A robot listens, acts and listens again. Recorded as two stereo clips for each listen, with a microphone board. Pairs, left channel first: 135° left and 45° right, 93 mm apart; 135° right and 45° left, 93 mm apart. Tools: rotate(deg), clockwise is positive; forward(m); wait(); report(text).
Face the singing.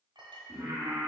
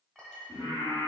rotate(105)
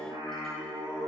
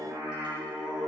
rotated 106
rotate(35)
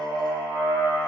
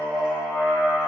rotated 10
rotate(50)
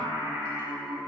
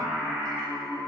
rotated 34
rotate(45)
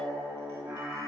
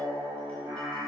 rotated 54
report("Found it: singing, straight ahead.")